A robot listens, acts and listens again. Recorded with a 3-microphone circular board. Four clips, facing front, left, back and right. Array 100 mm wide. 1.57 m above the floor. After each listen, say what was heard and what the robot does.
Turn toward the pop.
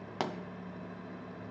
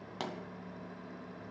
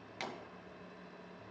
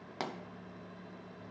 The pop: 10° right. Turn 10° right.
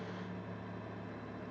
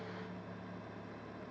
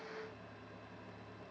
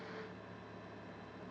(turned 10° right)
I heard a pop from this way, but can't make it out now.